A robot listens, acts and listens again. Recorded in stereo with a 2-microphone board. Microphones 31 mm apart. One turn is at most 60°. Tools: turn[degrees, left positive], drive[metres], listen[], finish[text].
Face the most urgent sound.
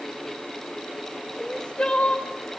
Thought: The crying: about 35° left or 145° left.
Action: turn[35]
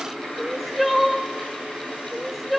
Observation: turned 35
Action: finish[Found it: crying, straight ahead.]